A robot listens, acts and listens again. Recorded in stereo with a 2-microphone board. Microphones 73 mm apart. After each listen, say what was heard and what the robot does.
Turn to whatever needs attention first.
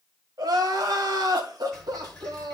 The crying: about 60° right or 120° right. Turn 60° right.
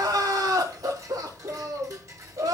So it is at 60° right. Turn 60° right.
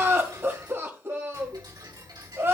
The crying is now 30° right. Turn 30° right.
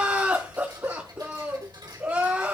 The crying is now 20° right. Turn 20° right.
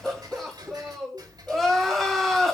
Found it: crying, straight ahead.